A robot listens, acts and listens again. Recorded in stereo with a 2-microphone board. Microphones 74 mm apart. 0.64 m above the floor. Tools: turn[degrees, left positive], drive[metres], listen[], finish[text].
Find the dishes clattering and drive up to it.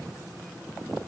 Action: listen[]
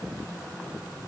Action: listen[]
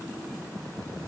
Action: finish[I can't make out dishes clattering to turn to.]